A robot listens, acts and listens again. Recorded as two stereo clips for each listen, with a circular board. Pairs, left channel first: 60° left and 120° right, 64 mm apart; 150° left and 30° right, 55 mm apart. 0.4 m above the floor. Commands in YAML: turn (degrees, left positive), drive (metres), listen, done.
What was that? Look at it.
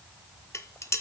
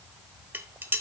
turn: 20
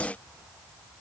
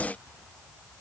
listen: true
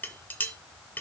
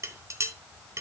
done: "Found it: dishes clattering, straight ahead."